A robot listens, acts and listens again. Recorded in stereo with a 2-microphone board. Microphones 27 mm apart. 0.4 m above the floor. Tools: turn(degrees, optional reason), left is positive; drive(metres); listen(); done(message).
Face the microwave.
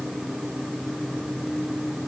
listen()
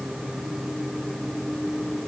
listen()
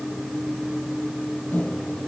turn(degrees=60, reason="The microwave: about 60° left or 120° left.")
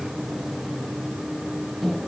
done("Found it: a microwave, straight ahead.")